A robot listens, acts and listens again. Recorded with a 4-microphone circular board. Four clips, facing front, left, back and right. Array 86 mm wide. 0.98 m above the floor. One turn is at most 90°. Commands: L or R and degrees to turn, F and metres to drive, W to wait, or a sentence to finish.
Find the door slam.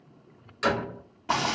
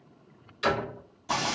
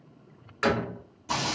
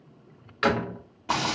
R90
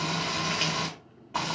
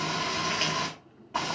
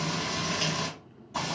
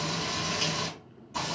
R25
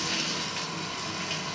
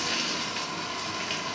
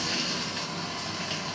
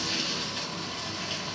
I heard a door slam from this way, but can't make it out now.